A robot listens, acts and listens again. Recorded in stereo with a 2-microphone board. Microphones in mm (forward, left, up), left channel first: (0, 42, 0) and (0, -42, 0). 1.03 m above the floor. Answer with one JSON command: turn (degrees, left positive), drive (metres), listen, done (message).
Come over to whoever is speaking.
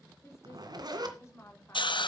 {"turn": 35}
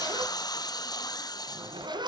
{"listen": true}
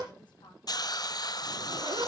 {"listen": true}
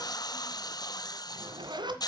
{"done": "I heard a woman speaking, but can't make it out now. It was about straight ahead or 110° left. I did not reach it."}